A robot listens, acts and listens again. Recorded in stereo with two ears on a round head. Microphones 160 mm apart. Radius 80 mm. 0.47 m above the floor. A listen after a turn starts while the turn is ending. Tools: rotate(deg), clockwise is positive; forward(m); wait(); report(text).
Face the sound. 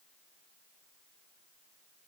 wait()
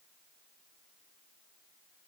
wait()
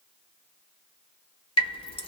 rotate(-30)
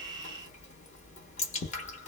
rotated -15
rotate(-135)
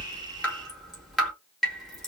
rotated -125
report("Facing the dripping, 1 to 2 m away.")